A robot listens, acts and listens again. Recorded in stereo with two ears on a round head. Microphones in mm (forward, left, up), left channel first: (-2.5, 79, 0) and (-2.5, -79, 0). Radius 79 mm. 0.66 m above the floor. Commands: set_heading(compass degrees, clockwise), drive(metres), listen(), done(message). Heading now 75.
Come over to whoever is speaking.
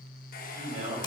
set_heading(115)
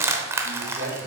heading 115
set_heading(215)
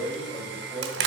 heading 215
drive(1.0)
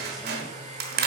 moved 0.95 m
listen()
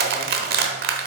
listen()
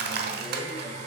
done("I heard a man speaking from this way, but can't make it out now. I did not reach it.")